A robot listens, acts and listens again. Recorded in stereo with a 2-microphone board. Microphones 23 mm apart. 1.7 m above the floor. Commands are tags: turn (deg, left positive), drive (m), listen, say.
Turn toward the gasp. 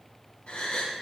<turn deg="50"/>
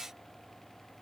<listen/>
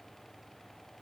<say>I heard a gasp, but can't make it out now. It was about straight ahead or 80° left.</say>